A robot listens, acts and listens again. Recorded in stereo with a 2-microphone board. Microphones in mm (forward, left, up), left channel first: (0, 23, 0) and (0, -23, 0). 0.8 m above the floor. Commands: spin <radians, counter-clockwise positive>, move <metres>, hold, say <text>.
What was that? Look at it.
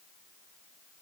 hold
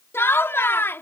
spin 1.05
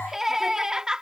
spin -0.26
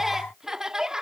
spin -0.26
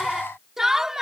spin -0.17
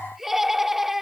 say Facing the laughter.